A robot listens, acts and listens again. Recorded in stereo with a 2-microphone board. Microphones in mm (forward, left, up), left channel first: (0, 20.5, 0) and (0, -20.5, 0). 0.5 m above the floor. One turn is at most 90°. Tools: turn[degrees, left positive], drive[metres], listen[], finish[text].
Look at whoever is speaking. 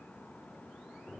Action: listen[]
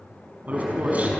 Thought: The man speaking: about 40° right or 140° right.
Action: turn[-40]
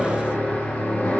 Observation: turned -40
Action: listen[]
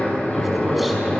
Action: listen[]
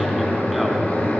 Action: finish[I heard a man speaking, but can't make it out now. It was about straight ahead or 100° right.]